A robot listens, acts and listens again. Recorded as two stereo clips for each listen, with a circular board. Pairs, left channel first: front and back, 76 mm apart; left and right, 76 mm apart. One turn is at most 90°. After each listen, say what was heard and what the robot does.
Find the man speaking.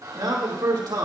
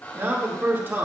The man speaking: 150° right. Turn 90° right.
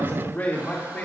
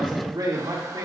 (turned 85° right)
The man speaking is now 65° right. Turn 65° right.
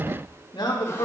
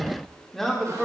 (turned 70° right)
Found it: a man speaking, straight ahead, 2 to 4 m away.